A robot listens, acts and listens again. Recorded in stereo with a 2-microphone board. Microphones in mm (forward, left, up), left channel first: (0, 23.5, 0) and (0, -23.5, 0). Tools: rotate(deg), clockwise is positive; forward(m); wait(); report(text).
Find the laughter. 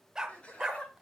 rotate(-25)
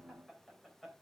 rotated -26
report("Found it: laughter, straight ahead.")